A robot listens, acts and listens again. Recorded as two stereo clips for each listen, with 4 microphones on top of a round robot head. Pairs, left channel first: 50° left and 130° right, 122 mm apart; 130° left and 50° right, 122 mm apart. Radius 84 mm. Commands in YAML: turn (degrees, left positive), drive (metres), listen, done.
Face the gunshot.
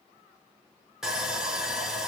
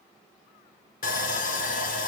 listen: true
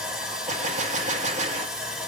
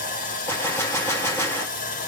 turn: -160
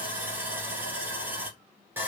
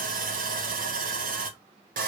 done: "I heard a gunshot from this way, but can't make it out now."